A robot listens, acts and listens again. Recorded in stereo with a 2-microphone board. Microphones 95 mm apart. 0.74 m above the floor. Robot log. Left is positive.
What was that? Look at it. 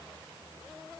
cmd idle
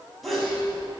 cmd yaw +30
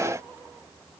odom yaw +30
cmd idle
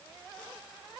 end: I heard a sneeze, but can't make it out now. It was about 30° right or 150° left.